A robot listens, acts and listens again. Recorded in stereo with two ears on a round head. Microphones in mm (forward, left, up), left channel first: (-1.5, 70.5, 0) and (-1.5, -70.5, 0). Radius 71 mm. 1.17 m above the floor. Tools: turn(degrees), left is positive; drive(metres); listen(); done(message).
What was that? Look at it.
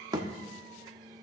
turn(degrees=-25)
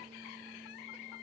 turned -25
listen()
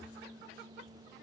done("I heard a thud, but can't make it out now. It was about straight ahead or 130° right.")